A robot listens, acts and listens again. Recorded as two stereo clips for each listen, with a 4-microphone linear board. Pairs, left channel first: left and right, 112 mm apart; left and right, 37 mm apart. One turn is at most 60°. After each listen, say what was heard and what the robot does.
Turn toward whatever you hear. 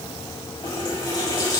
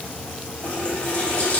The running tap: about 40° left or 140° left. Turn 40° left.
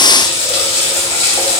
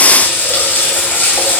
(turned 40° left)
So it is at 100° left. Turn 60° left.
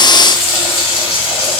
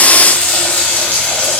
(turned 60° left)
The running tap is now 60° left. Turn 60° left.
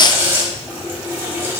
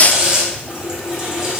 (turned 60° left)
The running tap is now 20° right. Turn 20° right.
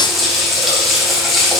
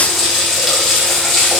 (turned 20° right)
Facing the running tap.